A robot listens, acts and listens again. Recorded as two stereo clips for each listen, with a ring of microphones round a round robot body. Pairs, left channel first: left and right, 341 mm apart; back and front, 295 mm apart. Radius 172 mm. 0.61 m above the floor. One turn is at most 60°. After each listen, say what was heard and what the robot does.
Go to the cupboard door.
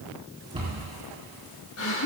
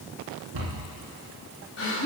The cupboard door: 15° right. Turn 15° right.
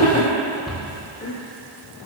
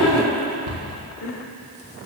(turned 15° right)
Drive 1.0 m forward.
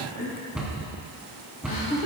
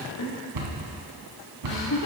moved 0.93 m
Drive 1.0 m forward.
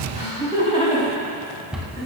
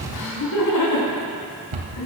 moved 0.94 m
Drive 1.0 m forward.
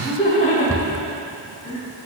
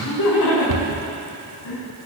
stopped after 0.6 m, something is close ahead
Keep listening.
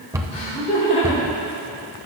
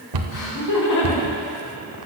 The cupboard door is now 10° right. Turn 10° right.
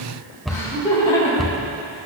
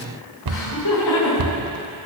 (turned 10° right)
Arrived at the cupboard door, straight ahead.